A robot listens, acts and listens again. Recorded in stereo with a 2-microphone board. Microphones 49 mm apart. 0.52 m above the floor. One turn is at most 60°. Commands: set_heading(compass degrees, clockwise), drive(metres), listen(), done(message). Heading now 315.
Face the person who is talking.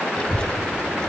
set_heading(295)
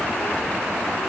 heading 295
set_heading(235)
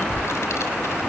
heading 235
set_heading(175)
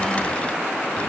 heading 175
set_heading(150)
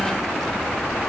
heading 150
done("Facing the child speaking, 2 to 4 m away.")